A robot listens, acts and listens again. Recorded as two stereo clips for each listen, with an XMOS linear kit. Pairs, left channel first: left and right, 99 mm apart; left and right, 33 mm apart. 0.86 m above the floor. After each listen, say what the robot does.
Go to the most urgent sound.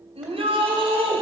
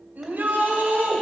Turn 90° right.
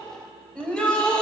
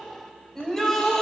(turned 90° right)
Turn 10° left.
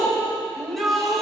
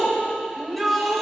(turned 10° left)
Drive 1.0 m forward.
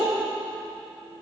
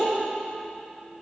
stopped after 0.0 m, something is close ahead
Something is in my way. I am facing the shout but have not reached it.